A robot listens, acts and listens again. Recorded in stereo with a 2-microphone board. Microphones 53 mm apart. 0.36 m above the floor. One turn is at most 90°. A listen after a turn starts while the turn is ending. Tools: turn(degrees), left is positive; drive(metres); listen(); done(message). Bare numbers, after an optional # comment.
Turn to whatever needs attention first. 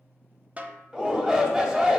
# The shout: about 15° right or 165° right.
turn(-15)
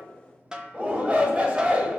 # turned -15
# So it is at 155° right.
turn(-90)
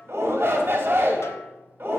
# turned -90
# The shout is now 55° right.
turn(-55)
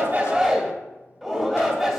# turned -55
done("Found it: a shout, straight ahead, 1 to 2 m away.")